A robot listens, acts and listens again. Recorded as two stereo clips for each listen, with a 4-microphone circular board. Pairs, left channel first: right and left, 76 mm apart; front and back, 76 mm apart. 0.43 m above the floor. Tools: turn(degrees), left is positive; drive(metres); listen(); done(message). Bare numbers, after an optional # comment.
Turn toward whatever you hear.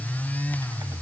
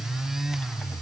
listen()
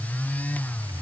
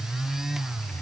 listen()
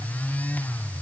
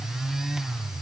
done("I can't make out anything.")